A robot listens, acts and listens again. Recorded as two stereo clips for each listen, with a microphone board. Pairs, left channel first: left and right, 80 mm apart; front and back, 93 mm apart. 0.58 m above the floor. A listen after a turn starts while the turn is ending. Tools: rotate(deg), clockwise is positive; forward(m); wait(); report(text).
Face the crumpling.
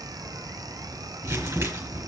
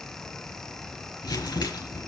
rotate(45)
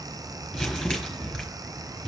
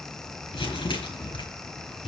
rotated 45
report("Found it: crumpling, straight ahead.")